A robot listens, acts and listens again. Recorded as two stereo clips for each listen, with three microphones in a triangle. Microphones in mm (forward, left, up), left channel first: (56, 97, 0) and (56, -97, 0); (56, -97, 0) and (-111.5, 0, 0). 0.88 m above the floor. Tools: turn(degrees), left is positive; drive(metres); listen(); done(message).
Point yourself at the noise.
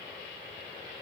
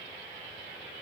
listen()
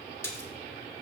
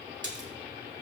turn(degrees=170)
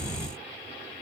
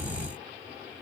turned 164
done("Facing where the splash came from. I can't hear it now.")